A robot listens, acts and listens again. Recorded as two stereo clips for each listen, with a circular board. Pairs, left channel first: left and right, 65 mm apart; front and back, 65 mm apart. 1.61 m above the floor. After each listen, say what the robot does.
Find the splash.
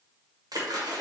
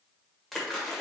Turn 85° right.
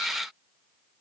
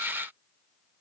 Facing where the splash came from. I can't hear it now.